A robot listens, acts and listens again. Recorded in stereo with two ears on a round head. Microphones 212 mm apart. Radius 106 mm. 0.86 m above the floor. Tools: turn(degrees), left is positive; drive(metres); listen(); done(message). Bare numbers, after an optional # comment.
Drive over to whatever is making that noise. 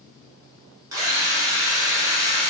# The drill: about 15° right or 165° right.
turn(-15)
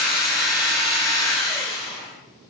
drive(1.0)
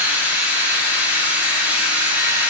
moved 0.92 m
# The drill is now 10° right.
turn(-10)
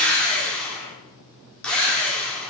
drive(1.0)
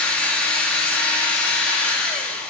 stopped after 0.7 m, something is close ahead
done("I am next to the drill.")